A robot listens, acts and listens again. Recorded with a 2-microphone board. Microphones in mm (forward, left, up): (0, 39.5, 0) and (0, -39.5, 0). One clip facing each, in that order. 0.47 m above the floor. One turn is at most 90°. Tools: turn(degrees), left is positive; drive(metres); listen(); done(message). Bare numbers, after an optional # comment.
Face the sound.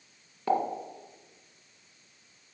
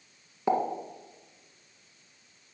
# The pop: about 15° right or 165° right.
turn(-15)
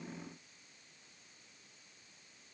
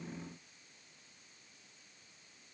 listen()
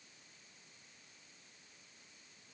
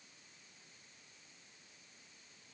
done("I heard a pop, but can't make it out now. It was about straight ahead or 150° right.")